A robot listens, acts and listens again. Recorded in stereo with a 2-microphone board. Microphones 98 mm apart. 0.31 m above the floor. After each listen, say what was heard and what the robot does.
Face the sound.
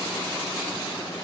Keep listening.
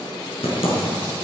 The typing on a keyboard: about 70° left or 110° left. Turn 70° left.
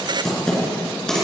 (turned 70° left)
Found it: typing on a keyboard, straight ahead.